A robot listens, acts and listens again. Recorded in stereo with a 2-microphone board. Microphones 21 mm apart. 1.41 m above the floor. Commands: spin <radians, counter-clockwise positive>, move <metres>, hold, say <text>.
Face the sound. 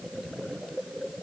hold
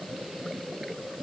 hold
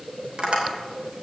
spin -0.87
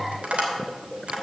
spin -1.40
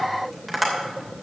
say Found it: tapping, straight ahead.